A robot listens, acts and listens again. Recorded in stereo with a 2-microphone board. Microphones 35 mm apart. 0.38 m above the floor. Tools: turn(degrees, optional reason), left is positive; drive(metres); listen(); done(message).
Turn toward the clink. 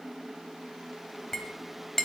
turn(degrees=30)
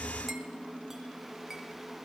listen()
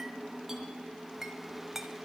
turn(degrees=-15, reason="So it is at 15° right.")
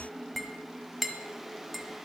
done("Found it: a clink, straight ahead, 1 to 2 m away.")